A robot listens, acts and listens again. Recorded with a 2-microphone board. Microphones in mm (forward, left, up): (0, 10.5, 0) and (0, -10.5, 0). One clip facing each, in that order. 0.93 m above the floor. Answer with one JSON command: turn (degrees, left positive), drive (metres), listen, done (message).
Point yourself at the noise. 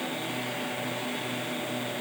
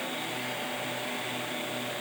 {"listen": true}
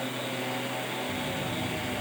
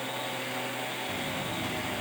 {"turn": -90}
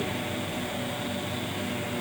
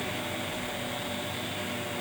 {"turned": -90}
{"done": "Found it: a buzzer, straight ahead."}